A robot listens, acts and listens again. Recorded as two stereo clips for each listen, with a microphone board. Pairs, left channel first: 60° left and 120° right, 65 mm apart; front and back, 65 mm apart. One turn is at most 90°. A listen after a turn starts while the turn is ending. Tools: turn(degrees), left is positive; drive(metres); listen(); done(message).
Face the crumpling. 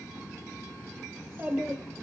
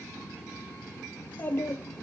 listen()
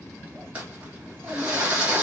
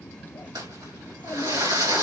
turn(degrees=90)
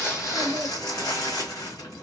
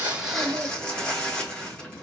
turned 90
turn(degrees=75)
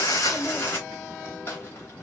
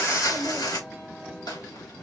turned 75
done("Facing the crumpling, 2 to 4 m away.")